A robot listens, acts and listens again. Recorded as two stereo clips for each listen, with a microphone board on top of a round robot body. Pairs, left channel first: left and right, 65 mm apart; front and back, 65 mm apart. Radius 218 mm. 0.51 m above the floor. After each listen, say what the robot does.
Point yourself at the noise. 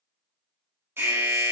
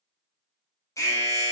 Turn 40° right.
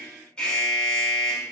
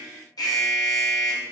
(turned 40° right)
Turn 10° left.
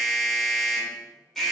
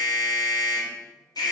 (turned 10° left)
Facing the alarm.